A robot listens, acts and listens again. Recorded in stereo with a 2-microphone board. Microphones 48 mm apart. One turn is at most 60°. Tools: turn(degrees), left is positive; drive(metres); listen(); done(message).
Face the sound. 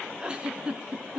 turn(degrees=-20)
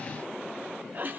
turn(degrees=-60)
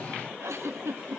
turn(degrees=-60)
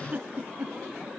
turn(degrees=-35)
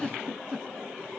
done("Facing the giggle, 2 to 4 m away.")